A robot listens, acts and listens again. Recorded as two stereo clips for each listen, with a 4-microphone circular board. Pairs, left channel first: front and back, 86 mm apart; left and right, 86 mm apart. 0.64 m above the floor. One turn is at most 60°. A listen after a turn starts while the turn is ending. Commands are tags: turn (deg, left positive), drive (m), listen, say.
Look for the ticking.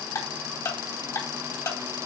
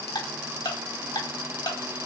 <turn deg="55"/>
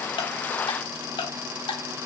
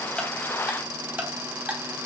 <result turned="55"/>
<turn deg="-15"/>
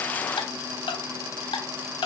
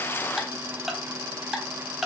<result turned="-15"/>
<say>Found it: ticking, straight ahead.</say>